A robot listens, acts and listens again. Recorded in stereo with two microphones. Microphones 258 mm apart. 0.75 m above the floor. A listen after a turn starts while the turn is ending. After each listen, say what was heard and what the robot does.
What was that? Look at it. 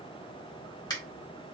The finger snap: about 15° left or 165° left. Turn 15° left.
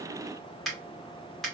Found it: a finger snap, straight ahead, 1 to 2 m away.